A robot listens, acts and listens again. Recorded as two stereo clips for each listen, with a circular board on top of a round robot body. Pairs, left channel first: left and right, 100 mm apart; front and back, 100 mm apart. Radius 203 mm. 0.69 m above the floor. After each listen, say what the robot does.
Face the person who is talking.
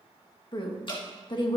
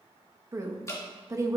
Turn 125° left.
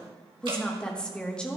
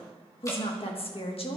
Turn 10° left.
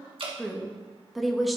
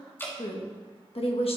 Facing the woman speaking, 1 to 2 m away.